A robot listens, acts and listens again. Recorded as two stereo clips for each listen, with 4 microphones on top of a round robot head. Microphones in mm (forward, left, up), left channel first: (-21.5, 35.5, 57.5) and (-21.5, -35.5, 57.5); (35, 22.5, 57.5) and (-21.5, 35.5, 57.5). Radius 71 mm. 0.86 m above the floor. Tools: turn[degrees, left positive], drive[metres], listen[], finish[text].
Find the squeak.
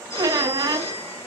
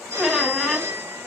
Thought: The squeak: 105° right.
Action: turn[-105]
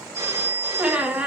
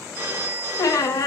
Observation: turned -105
Thought: The squeak is now 15° right.
Action: turn[-15]
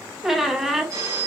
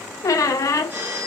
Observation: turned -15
Action: finish[Found it: a squeak, straight ahead, under 1 m away.]